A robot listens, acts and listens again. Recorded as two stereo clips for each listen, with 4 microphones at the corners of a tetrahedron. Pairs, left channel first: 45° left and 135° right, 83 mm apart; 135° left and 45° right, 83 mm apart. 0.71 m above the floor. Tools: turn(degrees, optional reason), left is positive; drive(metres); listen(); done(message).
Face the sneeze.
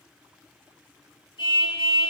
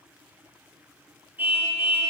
listen()
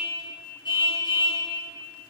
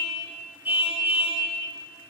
listen()
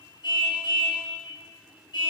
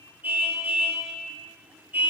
done("I can't make out a sneeze, only a car horn.")